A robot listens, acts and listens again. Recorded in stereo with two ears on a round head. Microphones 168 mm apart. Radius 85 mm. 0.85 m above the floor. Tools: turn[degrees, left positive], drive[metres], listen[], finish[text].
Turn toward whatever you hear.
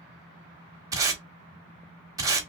Thought: The tape being pulled: about 20° right or 160° right.
Action: turn[-20]
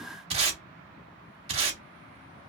Thought: So it is at 140° right.
Action: turn[-140]
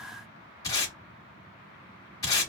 Thought: The tape being pulled is now 20° left.
Action: turn[20]
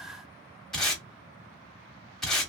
Action: finish[Found it: tape being pulled, straight ahead.]